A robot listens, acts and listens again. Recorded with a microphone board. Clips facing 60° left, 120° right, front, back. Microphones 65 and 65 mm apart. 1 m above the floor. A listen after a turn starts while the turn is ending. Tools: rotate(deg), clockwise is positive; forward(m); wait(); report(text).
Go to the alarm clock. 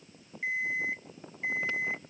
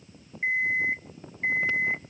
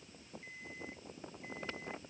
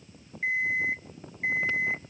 rotate(170)
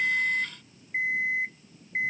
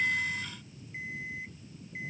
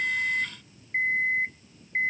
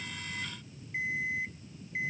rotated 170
rotate(-45)
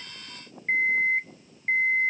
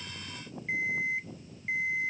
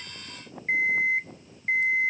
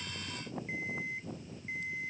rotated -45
rotate(-20)
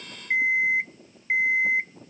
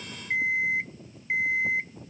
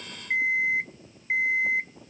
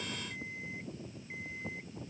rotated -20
forward(1.0)
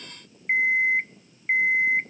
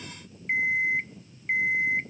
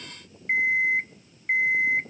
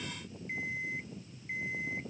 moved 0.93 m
forward(1.0)
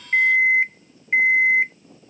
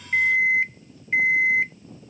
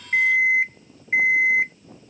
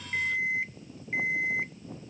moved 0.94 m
forward(1.0)
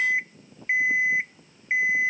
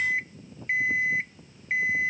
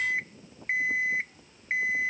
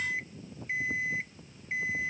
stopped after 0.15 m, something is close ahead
rotate(10)
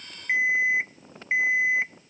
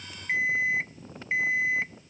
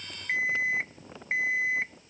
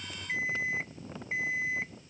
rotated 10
report("Arrived at the alarm clock, straight ahead.")